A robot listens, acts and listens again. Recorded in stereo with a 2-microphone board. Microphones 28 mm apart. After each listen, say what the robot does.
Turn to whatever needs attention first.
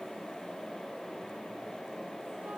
Keep listening.
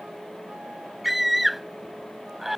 Turn 30° right.
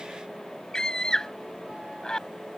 Turn 25° left.
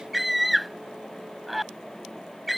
Facing the scream.